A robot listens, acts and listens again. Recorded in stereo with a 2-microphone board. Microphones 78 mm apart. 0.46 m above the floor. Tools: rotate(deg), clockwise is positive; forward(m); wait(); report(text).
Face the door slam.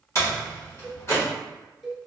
rotate(-40)
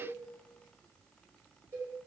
wait()
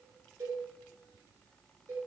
report("I heard a door slam, but can't make it out now. It was about straight ahead or 100° left.")